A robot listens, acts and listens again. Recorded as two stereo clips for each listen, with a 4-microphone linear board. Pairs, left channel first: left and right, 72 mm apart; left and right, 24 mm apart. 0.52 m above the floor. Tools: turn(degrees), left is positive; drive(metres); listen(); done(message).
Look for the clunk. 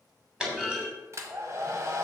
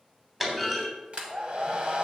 turn(degrees=-30)
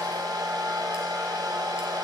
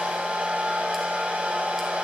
listen()
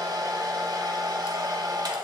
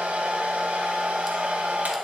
done("I heard a clunk, but can't make it out now. It was about 20° left or 140° right.")